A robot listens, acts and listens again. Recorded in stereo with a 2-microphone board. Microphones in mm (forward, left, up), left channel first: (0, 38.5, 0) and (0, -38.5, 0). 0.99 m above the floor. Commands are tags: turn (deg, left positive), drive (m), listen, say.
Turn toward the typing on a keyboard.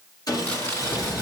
<turn deg="55"/>
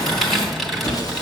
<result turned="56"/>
<say>Found it: typing on a keyboard, straight ahead.</say>